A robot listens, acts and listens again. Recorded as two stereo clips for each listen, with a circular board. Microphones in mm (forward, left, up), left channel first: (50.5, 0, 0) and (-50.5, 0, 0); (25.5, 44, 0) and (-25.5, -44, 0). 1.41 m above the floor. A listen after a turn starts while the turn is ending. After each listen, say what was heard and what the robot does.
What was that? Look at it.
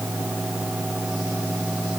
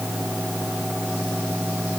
Keep listening.
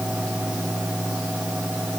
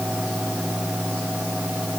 Keep listening.
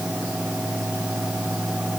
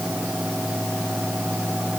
I can't make out anything to turn to.